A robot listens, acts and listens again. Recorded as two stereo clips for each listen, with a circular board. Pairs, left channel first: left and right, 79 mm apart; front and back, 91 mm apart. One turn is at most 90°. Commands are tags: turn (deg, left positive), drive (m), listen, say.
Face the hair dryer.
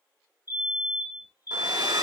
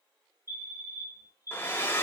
<turn deg="-65"/>
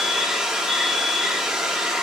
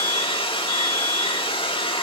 <say>Facing the hair dryer.</say>